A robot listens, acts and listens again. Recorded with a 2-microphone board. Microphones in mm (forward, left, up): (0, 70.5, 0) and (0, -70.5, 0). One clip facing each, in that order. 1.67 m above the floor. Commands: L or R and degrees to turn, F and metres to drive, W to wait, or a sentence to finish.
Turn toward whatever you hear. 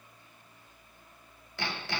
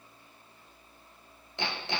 R20
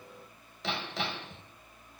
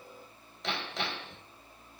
Facing the hammering.